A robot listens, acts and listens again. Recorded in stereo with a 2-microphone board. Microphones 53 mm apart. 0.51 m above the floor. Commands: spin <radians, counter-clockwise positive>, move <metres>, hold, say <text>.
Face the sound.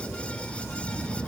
hold
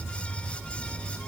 hold
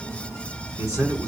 spin -1.57
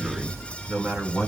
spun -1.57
spin -0.26
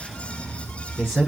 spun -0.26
say Found it: a man speaking, straight ahead.